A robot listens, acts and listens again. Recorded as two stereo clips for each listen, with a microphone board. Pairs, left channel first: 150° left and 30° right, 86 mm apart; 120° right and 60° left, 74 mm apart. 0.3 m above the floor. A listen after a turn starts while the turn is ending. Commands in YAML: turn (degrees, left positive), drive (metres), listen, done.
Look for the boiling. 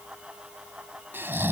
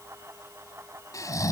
listen: true
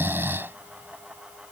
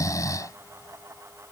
listen: true
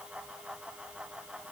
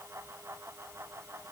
done: "I can't make out boiling to turn to."